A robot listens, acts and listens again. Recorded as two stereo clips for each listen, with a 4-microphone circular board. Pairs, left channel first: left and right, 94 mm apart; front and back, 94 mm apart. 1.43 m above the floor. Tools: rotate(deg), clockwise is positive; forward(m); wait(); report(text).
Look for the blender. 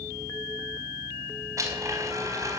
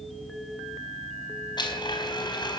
rotate(35)
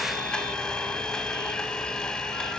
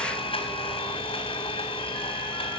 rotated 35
report("Found it: a blender, straight ahead, over 4 m away.")